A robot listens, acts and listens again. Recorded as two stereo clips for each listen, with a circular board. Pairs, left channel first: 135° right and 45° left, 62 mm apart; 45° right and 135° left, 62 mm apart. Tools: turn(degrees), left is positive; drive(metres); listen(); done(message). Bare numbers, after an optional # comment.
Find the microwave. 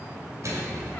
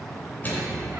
# The microwave: 15° left.
turn(15)
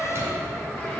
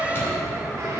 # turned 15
listen()
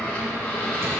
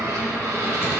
listen()
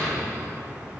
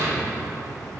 done("Facing where the microwave came from. I can't hear it now.")